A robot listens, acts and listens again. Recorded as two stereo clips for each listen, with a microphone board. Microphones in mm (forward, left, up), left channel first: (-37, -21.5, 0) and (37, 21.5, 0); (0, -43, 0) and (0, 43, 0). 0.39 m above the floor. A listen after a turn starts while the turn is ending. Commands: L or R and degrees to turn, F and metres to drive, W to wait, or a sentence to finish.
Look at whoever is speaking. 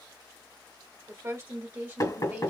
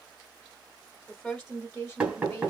R15
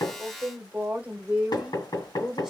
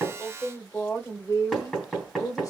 R60
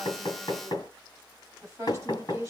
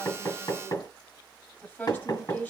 R30
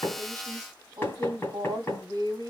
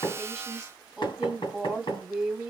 Found it: a woman speaking, straight ahead, 1 to 2 m away.